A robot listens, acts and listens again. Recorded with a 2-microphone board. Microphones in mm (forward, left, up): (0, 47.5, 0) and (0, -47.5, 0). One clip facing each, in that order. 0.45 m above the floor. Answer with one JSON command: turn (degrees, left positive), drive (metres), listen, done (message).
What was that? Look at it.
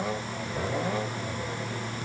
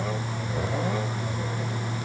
{"listen": true}
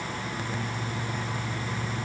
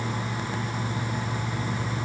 {"listen": true}
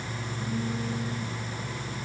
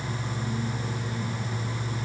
{"done": "I can't make out anything."}